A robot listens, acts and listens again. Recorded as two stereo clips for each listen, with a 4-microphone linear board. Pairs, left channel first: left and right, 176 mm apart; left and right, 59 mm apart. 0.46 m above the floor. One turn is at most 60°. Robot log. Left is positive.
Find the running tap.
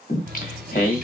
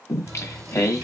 note: The running tap: about 60° right or 120° right.
cmd yaw -60
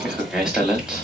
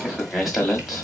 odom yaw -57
cmd idle
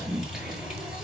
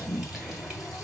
end: Found it: a running tap, straight ahead.